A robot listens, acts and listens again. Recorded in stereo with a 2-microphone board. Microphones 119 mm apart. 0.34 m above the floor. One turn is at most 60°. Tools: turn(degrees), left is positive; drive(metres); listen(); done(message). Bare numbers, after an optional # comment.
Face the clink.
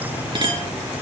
# The clink: about 45° right or 135° right.
turn(-45)
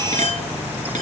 # So it is at 90° right.
turn(-60)
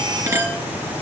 # The clink is now 20° right.
turn(-20)
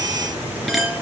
done("Found it: a clink, straight ahead.")